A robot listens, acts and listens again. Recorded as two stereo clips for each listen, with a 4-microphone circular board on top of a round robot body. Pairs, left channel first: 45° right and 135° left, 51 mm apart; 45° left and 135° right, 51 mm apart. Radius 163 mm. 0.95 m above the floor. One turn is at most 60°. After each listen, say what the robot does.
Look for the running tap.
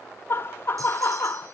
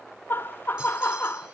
Keep listening.
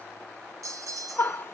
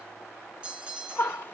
Keep listening.
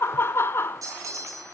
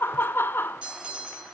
I can't make out a running tap, only laughter and a bell.